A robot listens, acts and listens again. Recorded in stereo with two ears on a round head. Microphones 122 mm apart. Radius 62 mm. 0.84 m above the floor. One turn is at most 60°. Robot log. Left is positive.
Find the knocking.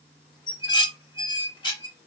cmd idle
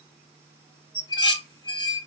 cmd idle
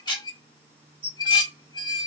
end: I can't make out knocking to turn to.